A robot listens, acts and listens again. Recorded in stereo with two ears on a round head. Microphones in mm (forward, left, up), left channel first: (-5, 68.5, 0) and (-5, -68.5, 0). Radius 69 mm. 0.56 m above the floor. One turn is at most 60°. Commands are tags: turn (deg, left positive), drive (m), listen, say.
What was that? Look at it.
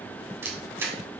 <turn deg="-15"/>
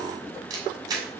<turn deg="-60"/>
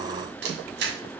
<turn deg="-60"/>
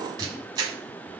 <turn deg="-25"/>
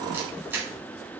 <turn deg="-15"/>
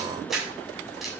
<say>Found it: a camera shutter, straight ahead, 2 to 4 m away.</say>